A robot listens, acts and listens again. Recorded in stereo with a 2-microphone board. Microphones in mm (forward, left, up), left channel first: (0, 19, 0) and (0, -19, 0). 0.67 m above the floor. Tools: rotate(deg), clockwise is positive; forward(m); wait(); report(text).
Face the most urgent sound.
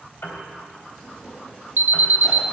rotate(70)
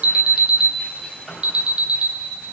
rotate(30)
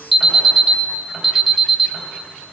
report("Facing the alarm.")